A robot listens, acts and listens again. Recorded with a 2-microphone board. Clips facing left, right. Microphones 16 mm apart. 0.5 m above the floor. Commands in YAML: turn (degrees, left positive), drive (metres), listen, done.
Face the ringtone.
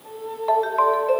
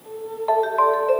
turn: 30
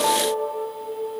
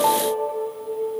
turn: -30
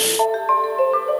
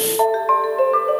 done: "Found it: a ringtone, straight ahead."